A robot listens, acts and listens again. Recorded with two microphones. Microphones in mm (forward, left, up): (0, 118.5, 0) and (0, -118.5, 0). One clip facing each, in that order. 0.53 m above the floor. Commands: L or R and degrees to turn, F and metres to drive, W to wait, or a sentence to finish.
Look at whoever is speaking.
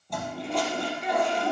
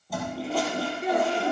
R55
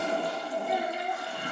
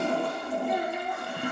R65
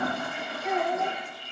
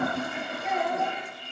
Facing the child speaking, 2 to 4 m away.